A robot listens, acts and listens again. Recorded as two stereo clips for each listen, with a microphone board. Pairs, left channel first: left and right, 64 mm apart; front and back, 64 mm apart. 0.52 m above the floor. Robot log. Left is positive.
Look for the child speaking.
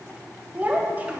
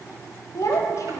note: The child speaking: 30° right.
cmd yaw -30
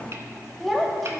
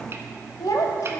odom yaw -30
end: Found it: a child speaking, straight ahead.